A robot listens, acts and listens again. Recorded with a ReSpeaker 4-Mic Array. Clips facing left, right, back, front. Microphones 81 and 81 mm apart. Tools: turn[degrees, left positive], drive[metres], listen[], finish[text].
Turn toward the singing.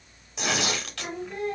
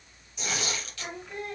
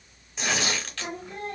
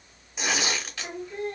Thought: The singing: straight behind.
Action: turn[180]
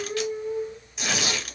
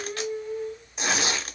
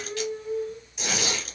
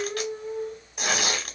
Thought: The singing is now 15° left.
Action: turn[15]
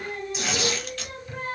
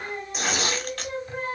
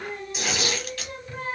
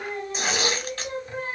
Thought: The singing is now 55° right.
Action: turn[-55]
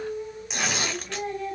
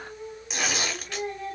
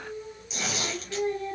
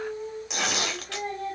Thought: The singing is now 10° right.
Action: turn[-10]
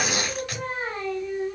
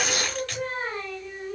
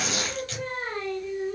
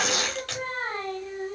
Action: finish[Found it: singing, straight ahead.]